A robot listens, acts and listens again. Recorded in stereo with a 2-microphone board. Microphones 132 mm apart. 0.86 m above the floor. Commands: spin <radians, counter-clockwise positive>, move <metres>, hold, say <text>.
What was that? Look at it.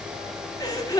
spin 0.52
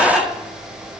say Facing the gasp, 1 to 2 m away.